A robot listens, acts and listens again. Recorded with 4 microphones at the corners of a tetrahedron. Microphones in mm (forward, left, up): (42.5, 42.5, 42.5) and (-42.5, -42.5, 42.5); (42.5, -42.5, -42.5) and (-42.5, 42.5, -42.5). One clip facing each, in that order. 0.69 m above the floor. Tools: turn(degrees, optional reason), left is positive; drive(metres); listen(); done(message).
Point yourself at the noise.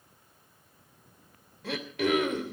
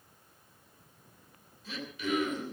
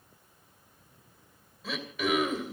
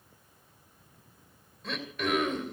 turn(degrees=45, reason="The throat clearing: 45° left.")
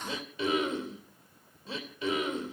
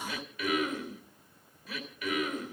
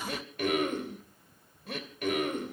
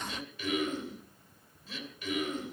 turn(degrees=-15, reason="The throat clearing is now 15° right.")
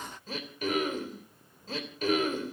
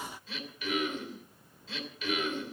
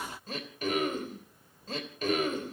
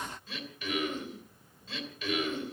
done("Facing the throat clearing, 2 to 4 m away.")